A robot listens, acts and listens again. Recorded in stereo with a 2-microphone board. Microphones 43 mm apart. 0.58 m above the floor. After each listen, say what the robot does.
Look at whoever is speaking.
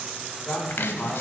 Turn 25° left.
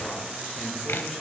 Keep listening.
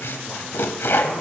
Keep listening.
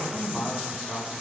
Facing the man speaking.